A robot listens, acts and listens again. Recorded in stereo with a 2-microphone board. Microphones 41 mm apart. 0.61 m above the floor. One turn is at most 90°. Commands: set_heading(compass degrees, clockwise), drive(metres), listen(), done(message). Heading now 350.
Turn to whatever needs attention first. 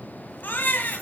set_heading(300)
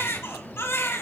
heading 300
set_heading(225)
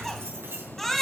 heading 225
done("Facing the baby crying.")